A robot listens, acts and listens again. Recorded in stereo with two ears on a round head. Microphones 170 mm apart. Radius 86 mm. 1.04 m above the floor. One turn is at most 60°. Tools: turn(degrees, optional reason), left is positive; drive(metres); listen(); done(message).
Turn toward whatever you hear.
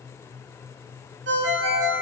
turn(degrees=-60, reason="The ringtone: about 60° right or 120° right.")
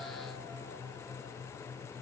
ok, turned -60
listen()
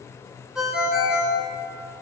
done("Facing the ringtone, 1 to 2 m away.")